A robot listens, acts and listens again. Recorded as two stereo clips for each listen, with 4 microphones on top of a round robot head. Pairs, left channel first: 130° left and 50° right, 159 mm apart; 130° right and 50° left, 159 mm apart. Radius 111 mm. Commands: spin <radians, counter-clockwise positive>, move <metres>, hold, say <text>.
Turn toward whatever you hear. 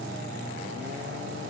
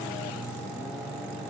hold
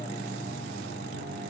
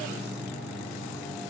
hold
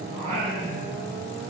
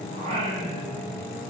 say Facing the singing.